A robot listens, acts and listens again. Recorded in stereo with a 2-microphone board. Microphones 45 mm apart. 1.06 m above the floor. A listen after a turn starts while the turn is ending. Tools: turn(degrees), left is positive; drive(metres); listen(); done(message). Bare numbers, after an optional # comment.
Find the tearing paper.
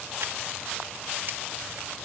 listen()
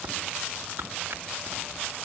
# The tearing paper: about 50° right or 130° right.
turn(-50)
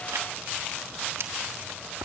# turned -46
# So it is at 85° right.
turn(-85)
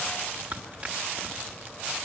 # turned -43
# The tearing paper is now 40° right.
turn(-40)
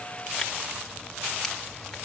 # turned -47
listen()
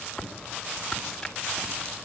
# The tearing paper is now 10° left.
turn(10)
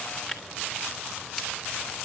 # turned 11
done("Found it: tearing paper, straight ahead, 2 to 4 m away.")